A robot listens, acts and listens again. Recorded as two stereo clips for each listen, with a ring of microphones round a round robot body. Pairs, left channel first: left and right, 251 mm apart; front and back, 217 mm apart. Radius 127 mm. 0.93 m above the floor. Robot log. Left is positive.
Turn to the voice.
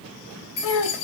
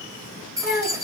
note: The child speaking: 50° left.
cmd yaw +50
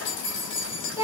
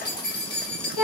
note: The child speaking is now 10° right.
cmd yaw -10
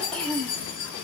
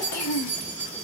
end: Facing the child speaking.